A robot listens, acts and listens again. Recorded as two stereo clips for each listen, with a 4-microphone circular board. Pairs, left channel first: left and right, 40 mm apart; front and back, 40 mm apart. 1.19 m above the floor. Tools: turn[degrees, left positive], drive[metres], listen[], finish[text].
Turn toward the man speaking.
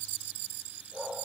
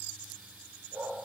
Action: listen[]
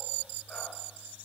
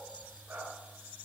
Action: listen[]
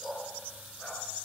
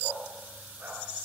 Action: finish[I can't make out a man speaking to turn to.]